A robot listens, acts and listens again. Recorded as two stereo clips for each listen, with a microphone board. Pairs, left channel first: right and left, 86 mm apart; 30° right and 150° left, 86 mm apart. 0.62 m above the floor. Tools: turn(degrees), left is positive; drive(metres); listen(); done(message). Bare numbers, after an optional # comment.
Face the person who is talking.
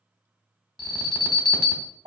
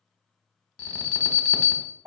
listen()
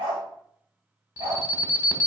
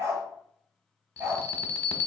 listen()
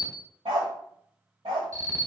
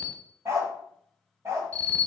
done("I can't make out anyone speaking to turn to.")